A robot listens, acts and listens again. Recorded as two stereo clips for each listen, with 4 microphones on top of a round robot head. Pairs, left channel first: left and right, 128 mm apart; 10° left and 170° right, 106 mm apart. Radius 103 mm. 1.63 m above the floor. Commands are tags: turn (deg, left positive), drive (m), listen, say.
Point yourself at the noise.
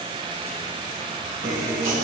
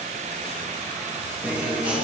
<turn deg="-115"/>
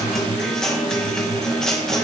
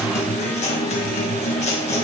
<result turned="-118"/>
<say>Found it: a guitar, straight ahead, 2 to 4 m away.</say>